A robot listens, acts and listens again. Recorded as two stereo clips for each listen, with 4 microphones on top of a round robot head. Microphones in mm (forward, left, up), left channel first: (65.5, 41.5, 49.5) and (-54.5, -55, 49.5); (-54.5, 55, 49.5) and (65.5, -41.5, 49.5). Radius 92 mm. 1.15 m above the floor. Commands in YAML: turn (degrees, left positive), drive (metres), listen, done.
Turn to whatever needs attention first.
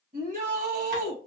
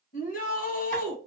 turn: 175
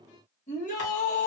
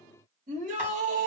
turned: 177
done: "Found it: a shout, straight ahead, 1 to 2 m away."